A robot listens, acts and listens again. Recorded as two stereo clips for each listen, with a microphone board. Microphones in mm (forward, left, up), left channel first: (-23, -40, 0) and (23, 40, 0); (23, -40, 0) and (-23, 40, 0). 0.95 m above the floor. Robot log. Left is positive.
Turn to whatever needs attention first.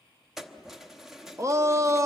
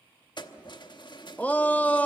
note: The shout: 10° left.
cmd yaw +10
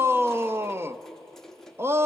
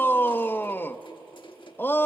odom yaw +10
end: Facing the shout, under 1 m away.